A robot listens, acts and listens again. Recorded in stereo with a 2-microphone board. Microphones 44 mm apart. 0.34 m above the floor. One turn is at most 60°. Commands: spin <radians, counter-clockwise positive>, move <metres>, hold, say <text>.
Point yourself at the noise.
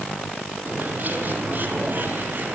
spin -0.79
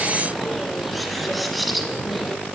say Found it: a bird, straight ahead, 2 to 4 m away.